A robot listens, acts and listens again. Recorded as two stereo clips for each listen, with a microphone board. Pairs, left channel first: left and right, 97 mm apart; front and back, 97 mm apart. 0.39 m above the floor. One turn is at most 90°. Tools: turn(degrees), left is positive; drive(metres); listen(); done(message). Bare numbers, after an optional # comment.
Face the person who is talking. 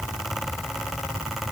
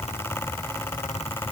listen()
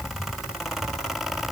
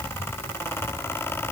listen()
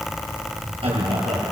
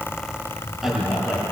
# The man speaking: 95° right.
turn(-90)
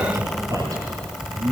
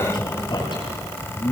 # The man speaking is now 40° right.
turn(-40)
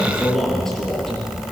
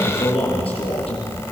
done("Found it: a man speaking, straight ahead, over 4 m away.")